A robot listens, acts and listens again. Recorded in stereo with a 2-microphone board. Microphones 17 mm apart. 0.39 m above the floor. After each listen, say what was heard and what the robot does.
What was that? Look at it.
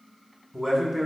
The man speaking: about 20° left or 160° left. Turn 20° left.
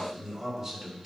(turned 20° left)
Turn 30° left.
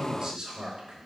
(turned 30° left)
So it is at 30° right. Turn 30° right.
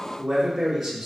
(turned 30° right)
Facing the man speaking, over 4 m away.